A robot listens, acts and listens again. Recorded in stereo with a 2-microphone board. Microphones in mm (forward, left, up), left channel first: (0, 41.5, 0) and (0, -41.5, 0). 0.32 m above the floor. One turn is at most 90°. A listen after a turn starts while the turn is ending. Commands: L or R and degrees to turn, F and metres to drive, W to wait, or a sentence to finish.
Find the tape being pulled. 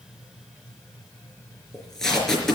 L30
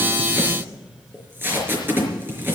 R25
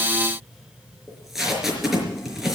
Facing the tape being pulled.